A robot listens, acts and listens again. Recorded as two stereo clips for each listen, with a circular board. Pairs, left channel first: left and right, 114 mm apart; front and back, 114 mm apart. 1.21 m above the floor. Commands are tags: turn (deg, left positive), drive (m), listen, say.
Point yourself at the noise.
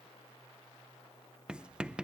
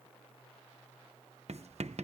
<turn deg="-170"/>
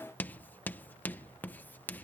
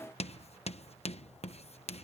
<turn deg="15"/>
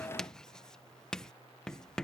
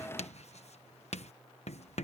<say>Facing the writing.</say>